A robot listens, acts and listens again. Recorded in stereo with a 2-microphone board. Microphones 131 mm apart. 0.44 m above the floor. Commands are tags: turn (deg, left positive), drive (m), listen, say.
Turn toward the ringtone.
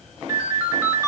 <turn deg="-25"/>
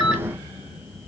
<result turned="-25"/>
<say>Facing the ringtone.</say>